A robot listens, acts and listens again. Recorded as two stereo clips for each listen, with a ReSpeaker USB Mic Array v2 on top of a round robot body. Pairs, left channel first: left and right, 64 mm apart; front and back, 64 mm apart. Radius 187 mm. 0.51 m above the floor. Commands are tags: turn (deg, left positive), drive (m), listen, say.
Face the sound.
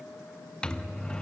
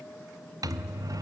<turn deg="165"/>
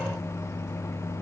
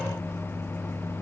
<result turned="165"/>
<turn deg="50"/>
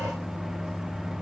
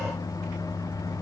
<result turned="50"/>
<say>Facing the microwave.</say>